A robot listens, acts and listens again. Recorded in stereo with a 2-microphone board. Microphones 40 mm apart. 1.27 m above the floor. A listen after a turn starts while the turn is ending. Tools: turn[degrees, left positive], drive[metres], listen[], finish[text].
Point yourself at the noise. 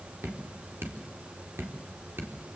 Action: turn[-90]
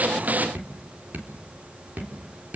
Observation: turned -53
Thought: So it is at 50° right.
Action: turn[-50]
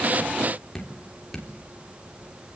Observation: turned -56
Thought: The dripping is now 10° left.
Action: turn[10]
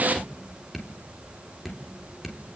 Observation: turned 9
Action: finish[Found it: dripping, straight ahead.]